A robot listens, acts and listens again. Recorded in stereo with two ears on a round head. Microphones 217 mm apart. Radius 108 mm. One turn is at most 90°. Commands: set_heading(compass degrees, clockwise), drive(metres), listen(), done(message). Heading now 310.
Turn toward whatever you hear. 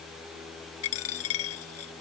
set_heading(245)
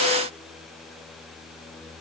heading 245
listen()
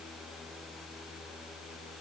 done("I heard a dropped coin, but can't make it out now. It was about straight ahead or 50° left.")